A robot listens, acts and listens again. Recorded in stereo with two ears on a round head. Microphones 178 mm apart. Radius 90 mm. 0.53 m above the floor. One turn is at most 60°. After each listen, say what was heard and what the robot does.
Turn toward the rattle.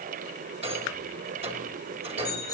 The rattle: about 30° right or 150° right. Turn 30° right.
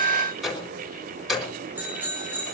Found it: a rattle, straight ahead, over 4 m away.